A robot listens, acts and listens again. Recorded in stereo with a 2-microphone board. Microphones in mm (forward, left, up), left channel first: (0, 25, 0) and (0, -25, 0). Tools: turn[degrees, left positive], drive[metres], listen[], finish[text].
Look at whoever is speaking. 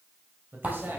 Thought: The man speaking: about 50° right or 130° right.
Action: turn[-50]
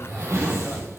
Action: listen[]
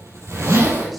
Action: listen[]
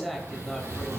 Action: finish[Facing the man speaking.]